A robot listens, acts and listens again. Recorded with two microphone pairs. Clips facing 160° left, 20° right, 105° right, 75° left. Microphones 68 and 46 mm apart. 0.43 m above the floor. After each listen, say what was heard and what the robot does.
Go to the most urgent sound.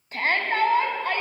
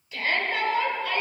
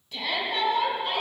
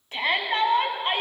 The shout: 120° left. Turn 120° left.
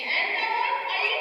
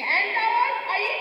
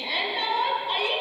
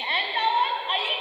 The shout is now 30° left. Turn 30° left.
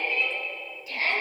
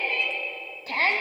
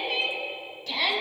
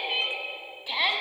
Drive 1.0 m forward.
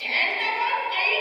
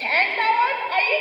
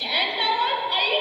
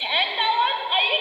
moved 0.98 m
The shout is now 15° left. Turn 15° left.
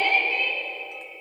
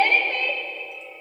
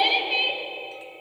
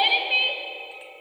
Drive 1.0 m forward.
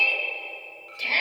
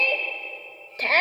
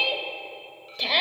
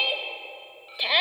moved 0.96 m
Drive 1.0 m forward.
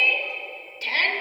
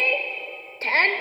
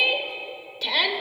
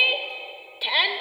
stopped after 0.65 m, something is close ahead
The shout is now 10° left. Turn 10° left.
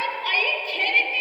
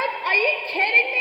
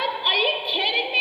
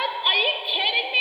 Arrived at the shout, straight ahead.